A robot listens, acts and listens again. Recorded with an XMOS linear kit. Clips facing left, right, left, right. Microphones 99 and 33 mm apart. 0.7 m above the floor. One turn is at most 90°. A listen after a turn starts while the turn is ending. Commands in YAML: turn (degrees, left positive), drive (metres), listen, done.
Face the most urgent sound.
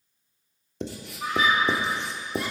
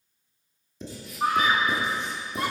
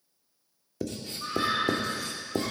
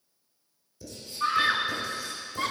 turn: -55
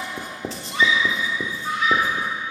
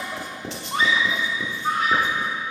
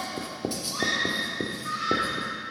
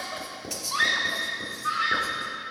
turn: -55
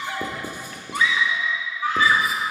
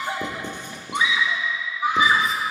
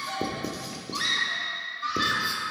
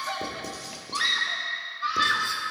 turn: -20
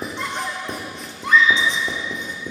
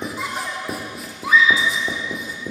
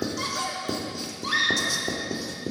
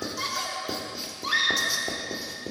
done: "Found it: a scream, straight ahead, under 1 m away."